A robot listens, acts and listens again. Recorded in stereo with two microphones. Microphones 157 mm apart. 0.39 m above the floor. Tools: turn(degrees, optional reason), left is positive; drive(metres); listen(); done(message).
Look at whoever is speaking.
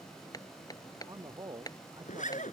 turn(degrees=-25, reason="The man speaking: about 25° right or 155° right.")
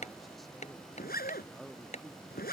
done("Facing the man speaking.")